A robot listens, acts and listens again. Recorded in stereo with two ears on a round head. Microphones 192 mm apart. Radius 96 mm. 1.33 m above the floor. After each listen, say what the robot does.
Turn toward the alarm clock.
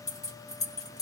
Keep listening.
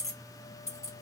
Keep listening.
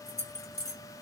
I can't make out an alarm clock, only keys jangling.